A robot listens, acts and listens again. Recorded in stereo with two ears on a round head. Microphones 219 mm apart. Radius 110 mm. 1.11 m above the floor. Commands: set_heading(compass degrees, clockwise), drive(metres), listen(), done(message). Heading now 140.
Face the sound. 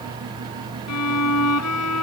set_heading(50)
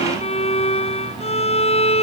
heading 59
set_heading(34)
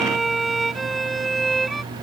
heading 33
done("Found it: a violin, straight ahead.")